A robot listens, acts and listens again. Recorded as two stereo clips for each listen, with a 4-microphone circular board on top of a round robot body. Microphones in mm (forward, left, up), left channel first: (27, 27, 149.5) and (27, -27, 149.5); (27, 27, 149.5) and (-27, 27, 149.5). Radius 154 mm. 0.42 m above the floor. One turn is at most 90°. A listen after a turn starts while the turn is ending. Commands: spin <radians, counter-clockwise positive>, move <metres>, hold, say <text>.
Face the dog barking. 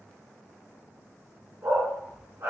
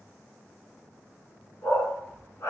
spin -0.79
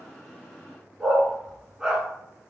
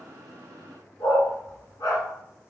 spin -0.17
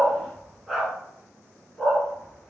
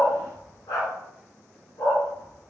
say Found it: a dog barking, straight ahead.